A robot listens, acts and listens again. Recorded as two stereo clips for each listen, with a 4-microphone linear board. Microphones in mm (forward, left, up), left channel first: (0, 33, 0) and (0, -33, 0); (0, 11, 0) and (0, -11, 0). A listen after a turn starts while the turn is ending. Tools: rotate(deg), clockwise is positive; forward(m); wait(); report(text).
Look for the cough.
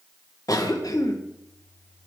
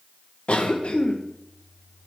rotate(-70)
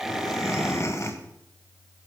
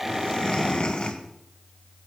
rotate(-45)
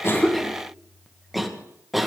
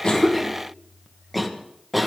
report("Found it: a cough, straight ahead, 1 to 2 m away.")